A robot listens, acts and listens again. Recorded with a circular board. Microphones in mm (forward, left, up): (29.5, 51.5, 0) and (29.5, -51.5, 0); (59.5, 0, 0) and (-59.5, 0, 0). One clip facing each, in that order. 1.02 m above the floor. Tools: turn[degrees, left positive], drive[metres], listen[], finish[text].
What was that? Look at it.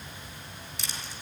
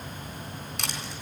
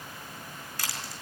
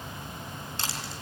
Thought: The crushing: 115° right.
Action: turn[-115]
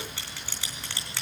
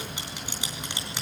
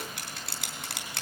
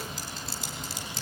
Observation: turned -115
Thought: The crushing is now 20° right.
Action: turn[-20]
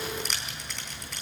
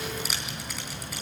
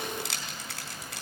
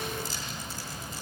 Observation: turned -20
Action: finish[Facing the crushing.]